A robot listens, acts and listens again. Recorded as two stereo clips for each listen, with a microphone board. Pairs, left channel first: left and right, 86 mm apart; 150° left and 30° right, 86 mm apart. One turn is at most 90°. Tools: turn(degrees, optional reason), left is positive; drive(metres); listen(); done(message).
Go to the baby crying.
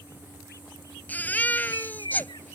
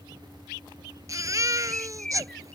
turn(degrees=20, reason="The baby crying: 20° left.")
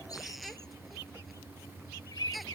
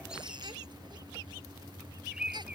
drive(metres=1.0)
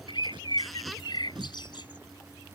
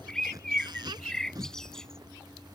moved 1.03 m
listen()
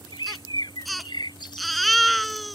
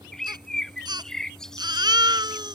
drive(metres=1.0)
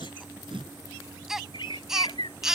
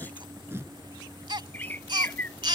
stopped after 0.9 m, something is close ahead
done("Arrived at the baby crying, straight ahead.")